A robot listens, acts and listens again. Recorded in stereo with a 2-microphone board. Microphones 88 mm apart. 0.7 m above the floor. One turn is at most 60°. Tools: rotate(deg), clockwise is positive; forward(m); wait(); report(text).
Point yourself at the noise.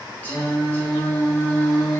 rotate(-35)
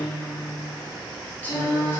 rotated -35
rotate(-30)
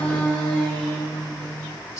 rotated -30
rotate(-35)
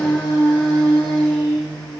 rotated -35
rotate(-10)
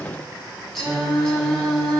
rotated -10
report("Found it: singing, straight ahead, 1 to 2 m away.")